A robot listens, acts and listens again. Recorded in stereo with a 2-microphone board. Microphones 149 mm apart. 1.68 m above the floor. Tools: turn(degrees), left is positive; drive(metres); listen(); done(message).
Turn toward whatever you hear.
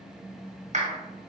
turn(degrees=-55)
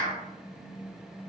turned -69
turn(degrees=-60)
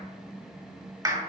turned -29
turn(degrees=-30)
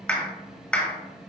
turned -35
done("Facing the clap.")